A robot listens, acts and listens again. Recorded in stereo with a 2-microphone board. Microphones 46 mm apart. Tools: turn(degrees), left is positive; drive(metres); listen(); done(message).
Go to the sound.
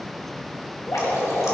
turn(degrees=90)
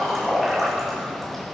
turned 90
drive(metres=1.0)
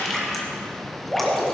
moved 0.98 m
drive(metres=1.0)
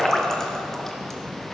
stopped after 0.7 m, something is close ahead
turn(degrees=10)
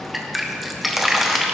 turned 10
done("I am next to the dripping.")